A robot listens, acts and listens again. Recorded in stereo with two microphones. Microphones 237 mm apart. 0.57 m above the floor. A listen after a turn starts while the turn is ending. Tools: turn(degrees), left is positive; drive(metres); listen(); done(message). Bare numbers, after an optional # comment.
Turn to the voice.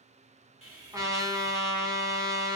listen()
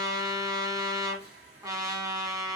listen()
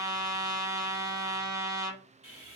done("I can't make out anyone speaking to turn to.")